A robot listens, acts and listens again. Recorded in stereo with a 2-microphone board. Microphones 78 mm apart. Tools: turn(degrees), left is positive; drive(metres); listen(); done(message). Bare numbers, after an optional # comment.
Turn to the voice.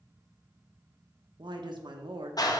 turn(-90)
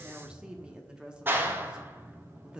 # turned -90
# So it is at 10° right.
turn(-10)
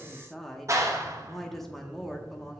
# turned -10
done("Facing the woman speaking.")